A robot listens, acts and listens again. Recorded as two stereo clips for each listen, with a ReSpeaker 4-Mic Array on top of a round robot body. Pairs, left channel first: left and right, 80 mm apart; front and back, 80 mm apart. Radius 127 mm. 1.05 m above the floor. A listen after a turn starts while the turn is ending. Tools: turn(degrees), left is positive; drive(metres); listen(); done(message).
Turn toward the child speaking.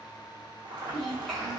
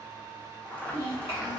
done("Found it: a child speaking, straight ahead, 1 to 2 m away.")